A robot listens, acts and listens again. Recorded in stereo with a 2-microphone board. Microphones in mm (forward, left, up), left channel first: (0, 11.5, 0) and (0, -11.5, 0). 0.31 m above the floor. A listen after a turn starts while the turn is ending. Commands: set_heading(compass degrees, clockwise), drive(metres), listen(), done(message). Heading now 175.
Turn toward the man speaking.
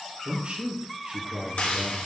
set_heading(245)
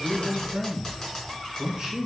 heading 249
set_heading(274)
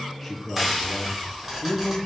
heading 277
done("Found it: a man speaking, straight ahead.")